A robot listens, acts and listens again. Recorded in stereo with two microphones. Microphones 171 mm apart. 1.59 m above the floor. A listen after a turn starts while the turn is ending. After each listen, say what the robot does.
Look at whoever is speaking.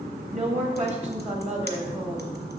Turn 40° right.
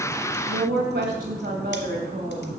Turn 100° right.
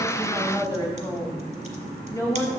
Turn 15° left.
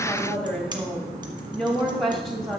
Facing the woman speaking, 2 to 4 m away.